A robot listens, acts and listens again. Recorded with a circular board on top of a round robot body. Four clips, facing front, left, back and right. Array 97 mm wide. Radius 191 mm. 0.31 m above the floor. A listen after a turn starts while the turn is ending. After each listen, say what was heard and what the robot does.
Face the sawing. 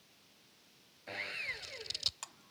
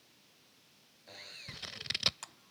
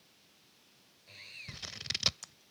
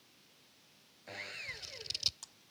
The sawing: 20° right. Turn 20° right.
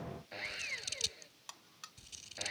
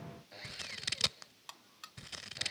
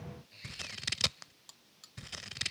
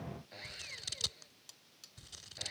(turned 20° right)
Found it: sawing, straight ahead.